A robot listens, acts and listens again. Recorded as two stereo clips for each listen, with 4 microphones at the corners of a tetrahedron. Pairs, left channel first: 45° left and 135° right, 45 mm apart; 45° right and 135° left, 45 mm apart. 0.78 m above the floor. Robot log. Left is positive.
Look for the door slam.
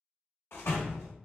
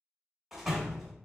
note: The door slam: 45° left.
cmd yaw +45
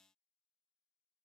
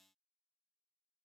end: Facing where the door slam came from. I can't hear it now.